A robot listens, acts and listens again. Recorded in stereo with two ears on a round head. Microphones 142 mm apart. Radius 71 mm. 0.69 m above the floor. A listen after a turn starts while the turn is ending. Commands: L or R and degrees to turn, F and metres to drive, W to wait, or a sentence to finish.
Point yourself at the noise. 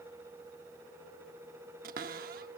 R60
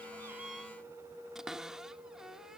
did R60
Facing the cupboard door.